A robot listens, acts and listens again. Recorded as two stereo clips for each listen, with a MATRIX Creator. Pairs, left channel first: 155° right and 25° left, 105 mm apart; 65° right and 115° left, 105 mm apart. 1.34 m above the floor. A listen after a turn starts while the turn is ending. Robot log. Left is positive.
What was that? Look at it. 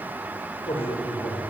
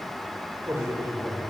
note: The man speaking: straight behind.
cmd yaw +180
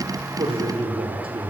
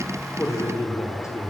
end: Facing the man speaking, over 4 m away.